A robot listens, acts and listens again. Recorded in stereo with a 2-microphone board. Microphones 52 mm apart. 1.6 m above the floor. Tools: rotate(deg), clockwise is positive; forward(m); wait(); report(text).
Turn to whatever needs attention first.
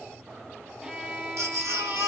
rotate(70)
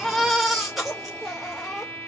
report("Found it: a baby crying, straight ahead, 2 to 4 m away.")